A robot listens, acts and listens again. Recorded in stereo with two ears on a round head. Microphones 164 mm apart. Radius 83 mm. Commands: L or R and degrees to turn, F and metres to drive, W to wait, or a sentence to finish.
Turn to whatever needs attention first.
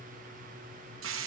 W
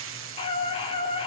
L30
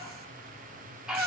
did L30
Facing the scream.